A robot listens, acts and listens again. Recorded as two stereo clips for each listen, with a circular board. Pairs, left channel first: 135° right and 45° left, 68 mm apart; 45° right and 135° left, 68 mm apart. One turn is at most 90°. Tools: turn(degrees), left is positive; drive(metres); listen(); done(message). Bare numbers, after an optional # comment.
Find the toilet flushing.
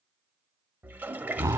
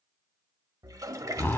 # The toilet flushing: 105° left.
turn(90)
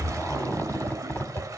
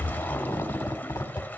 # The toilet flushing is now 15° left.
turn(15)
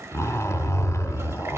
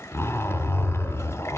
listen()
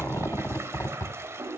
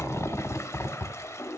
done("Facing the toilet flushing.")